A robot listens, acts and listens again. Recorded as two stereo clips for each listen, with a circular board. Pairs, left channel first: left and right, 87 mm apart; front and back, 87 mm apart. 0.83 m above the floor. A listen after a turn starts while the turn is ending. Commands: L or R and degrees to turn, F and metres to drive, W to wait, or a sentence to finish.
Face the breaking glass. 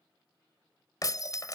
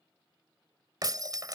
L135
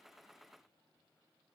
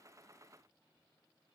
Facing where the breaking glass came from. I can't hear it now.